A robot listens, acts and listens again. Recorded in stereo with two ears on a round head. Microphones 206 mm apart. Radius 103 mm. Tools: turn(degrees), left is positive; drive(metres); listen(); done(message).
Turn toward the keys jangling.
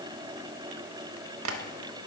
listen()
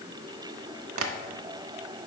listen()
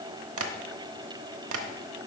done("I can't make out keys jangling to turn to.")